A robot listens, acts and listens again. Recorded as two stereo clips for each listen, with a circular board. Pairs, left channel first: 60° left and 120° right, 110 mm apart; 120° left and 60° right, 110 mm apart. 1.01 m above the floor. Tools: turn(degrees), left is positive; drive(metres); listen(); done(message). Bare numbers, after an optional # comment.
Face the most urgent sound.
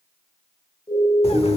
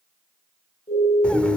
# The siren: 110° left.
turn(110)
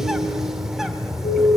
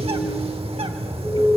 # The siren is now 35° left.
turn(35)
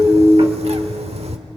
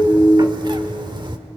# The siren is now 35° right.
turn(-35)
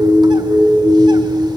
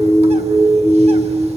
done("Found it: a siren, straight ahead, over 4 m away.")